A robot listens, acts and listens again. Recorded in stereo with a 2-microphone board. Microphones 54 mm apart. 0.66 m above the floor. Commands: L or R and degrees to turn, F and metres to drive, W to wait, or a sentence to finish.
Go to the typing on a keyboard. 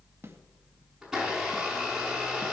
W
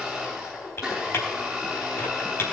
L50
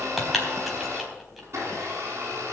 F1.0
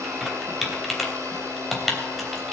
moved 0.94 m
F1.0
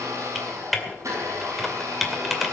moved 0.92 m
F1.0
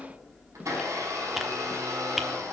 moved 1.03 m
W
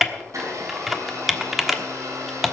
F1.0
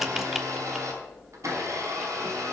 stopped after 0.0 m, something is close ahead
Arrived at the typing on a keyboard, straight ahead.